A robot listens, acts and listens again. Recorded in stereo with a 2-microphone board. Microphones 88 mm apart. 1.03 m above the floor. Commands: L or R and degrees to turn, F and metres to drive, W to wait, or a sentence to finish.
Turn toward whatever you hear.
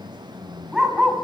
R30
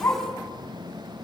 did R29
L30
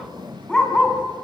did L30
L10
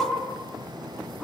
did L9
Found it: a dog barking, straight ahead.